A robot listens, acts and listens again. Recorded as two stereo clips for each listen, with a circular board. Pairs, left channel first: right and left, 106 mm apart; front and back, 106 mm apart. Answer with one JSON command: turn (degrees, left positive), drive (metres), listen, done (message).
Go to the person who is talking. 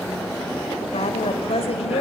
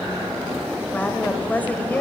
{"turn": -75}
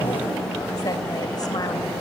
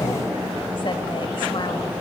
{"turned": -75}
{"listen": true}
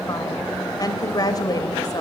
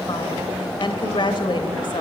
{"turn": -40}
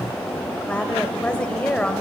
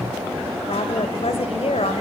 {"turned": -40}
{"turn": -10}
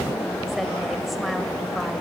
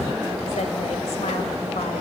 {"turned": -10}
{"listen": true}
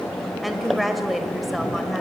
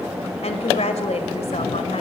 {"drive": 1.0}
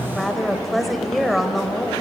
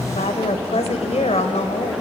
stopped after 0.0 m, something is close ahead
{"done": "Something is in my way. I am facing the woman speaking but have not reached it."}